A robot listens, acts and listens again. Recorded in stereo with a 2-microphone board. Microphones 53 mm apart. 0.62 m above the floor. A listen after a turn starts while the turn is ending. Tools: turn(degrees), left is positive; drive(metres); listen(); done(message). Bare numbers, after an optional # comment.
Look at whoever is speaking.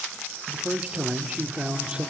# The man speaking: about 20° right or 160° right.
turn(-20)
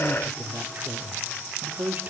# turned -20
# So it is at 135° right.
turn(-135)
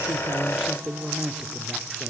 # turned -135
# The man speaking is now 10° right.
turn(-10)
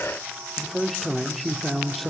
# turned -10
done("Facing the man speaking, 1 to 2 m away.")